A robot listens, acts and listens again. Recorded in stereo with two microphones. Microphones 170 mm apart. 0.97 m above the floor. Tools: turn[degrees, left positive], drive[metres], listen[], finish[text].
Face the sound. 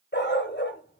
Action: turn[90]
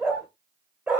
Action: finish[Facing the dog barking.]